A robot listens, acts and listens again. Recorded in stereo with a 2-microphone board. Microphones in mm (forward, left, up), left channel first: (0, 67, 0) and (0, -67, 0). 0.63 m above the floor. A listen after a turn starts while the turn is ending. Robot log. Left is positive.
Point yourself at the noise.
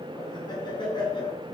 note: The laughter: about 35° left or 145° left.
cmd yaw +35
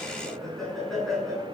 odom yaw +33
end: Found it: laughter, straight ahead, over 4 m away.